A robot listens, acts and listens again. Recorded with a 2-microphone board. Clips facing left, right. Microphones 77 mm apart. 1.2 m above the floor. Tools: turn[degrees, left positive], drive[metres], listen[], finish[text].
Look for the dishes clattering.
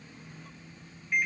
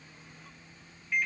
Action: listen[]
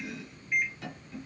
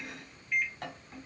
Action: listen[]
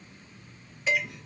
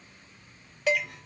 Action: turn[-90]
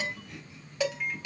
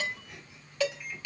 Thought: So it is at 15° left.
Action: turn[15]
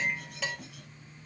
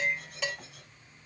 Action: finish[Facing the dishes clattering.]